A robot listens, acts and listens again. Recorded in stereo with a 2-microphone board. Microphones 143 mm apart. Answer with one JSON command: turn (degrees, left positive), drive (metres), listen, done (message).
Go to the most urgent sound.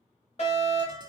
{"turn": 45}
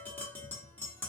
{"listen": true}
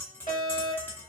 {"turn": 80}
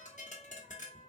{"listen": true}
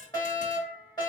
{"turn": 30}
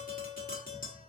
{"listen": true}
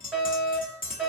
{"drive": 1.0}
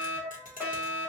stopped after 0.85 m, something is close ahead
{"turn": -20}
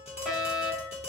{"done": "I am next to the fire alarm."}